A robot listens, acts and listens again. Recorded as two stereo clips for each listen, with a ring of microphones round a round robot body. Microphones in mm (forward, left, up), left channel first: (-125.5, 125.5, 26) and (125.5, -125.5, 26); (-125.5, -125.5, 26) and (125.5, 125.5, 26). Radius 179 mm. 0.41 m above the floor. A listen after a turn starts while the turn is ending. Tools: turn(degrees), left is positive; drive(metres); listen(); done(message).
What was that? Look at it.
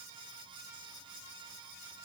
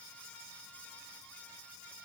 listen()
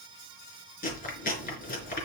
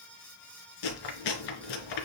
turn(degrees=-160)
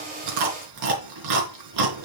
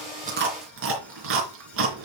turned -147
turn(degrees=-10)
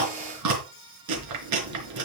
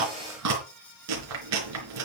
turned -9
done("Facing the chewing, 2 to 4 m away.")